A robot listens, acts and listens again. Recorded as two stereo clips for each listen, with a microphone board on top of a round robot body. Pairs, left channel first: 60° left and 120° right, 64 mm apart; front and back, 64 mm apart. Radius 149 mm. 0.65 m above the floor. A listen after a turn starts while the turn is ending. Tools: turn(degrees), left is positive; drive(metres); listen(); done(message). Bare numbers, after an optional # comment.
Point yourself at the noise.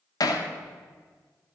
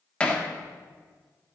# The hammering: 75° left.
turn(75)
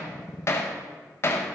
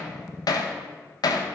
# The hammering is now 10° left.
turn(10)
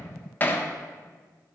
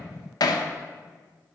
done("Found it: hammering, straight ahead, 1 to 2 m away.")